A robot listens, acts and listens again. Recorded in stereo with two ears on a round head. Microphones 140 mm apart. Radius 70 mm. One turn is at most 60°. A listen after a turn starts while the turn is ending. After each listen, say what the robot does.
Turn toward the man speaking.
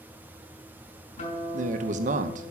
Turn 45° right.
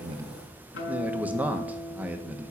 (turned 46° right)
Turn 10° right.
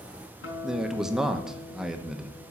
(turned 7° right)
Facing the man speaking.